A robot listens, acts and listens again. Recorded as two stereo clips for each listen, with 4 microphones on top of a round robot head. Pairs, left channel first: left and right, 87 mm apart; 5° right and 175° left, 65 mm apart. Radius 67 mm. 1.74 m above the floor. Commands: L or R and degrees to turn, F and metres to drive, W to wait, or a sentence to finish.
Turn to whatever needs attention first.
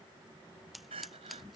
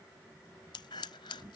R50
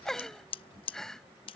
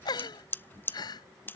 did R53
Facing the crying.